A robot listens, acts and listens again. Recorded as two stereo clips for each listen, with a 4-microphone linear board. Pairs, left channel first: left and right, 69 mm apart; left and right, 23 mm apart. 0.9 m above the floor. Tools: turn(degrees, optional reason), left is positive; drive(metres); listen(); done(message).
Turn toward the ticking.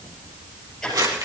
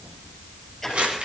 turn(degrees=30)
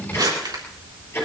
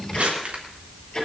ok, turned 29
turn(degrees=145, reason="So it is at 145° left.")
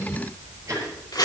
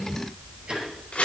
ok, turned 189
turn(degrees=-45, reason="The ticking is now 45° right.")
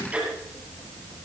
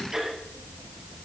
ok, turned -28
turn(degrees=-15, reason="The ticking is now 15° right.")
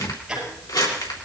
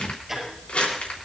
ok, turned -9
turn(degrees=-10, reason="The ticking is now 10° right.")
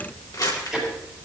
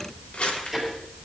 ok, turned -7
done("Found it: ticking, straight ahead.")